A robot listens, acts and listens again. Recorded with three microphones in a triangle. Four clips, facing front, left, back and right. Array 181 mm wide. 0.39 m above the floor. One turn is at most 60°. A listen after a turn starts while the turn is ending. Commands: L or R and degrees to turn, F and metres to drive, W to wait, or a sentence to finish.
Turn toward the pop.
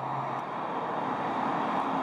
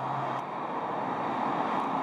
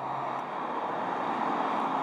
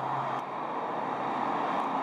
W
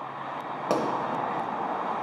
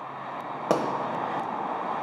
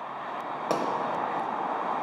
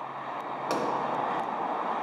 L60
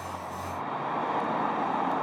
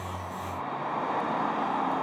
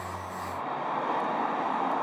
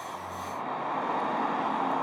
L30
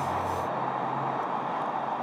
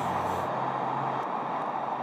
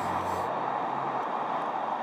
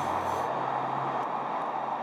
I heard a pop from this way, but can't make it out now.